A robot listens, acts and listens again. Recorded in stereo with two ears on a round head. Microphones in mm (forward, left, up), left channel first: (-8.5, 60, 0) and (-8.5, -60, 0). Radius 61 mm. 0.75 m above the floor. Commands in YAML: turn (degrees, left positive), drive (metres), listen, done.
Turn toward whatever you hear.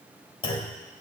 turn: 40
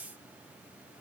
listen: true
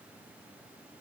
done: "I heard a clunk, but can't make it out now. It was about straight ahead or 100° left."